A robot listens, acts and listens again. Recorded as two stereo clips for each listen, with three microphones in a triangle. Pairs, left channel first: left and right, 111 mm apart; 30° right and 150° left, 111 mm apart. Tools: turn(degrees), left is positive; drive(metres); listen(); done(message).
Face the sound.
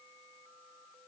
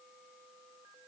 listen()
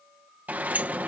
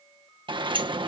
turn(degrees=-165)
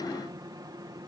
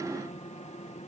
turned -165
listen()
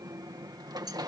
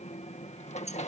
turn(degrees=-35)
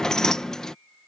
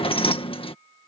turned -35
done("Found it: a sliding door, straight ahead.")